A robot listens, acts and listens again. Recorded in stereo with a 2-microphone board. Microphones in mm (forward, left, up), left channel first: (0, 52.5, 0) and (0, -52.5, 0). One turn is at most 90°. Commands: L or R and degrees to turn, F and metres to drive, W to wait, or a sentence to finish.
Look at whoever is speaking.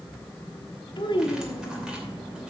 L50
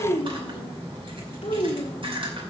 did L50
L80
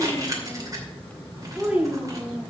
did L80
R10
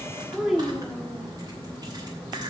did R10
Facing the child speaking.